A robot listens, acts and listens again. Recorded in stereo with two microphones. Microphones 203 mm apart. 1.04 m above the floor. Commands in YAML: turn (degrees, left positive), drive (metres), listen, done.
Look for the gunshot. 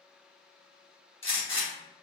turn: 70
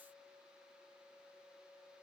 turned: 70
listen: true
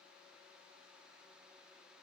done: "I heard a gunshot, but can't make it out now. It was about straight ahead or 40° left."